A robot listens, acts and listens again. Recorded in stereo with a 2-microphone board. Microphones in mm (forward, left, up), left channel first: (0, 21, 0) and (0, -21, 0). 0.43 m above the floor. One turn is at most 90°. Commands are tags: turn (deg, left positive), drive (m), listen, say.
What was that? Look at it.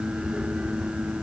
<listen/>
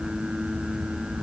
<listen/>
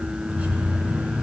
<turn deg="-30"/>
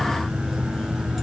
<say>Facing the keys jangling, 2 to 4 m away.</say>